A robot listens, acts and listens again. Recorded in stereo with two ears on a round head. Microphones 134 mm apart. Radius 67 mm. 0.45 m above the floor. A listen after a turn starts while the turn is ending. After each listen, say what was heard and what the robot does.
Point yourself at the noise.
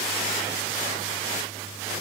Keep listening.
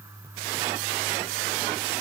Keep listening.
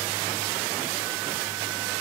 I can't make out anything.